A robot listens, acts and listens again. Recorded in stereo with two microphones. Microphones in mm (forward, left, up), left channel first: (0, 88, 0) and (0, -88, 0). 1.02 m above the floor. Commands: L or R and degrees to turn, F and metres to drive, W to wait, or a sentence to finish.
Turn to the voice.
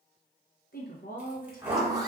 L55
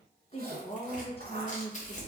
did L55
L45
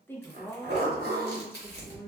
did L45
L15
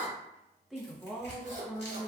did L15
Found it: a woman speaking, straight ahead, under 1 m away.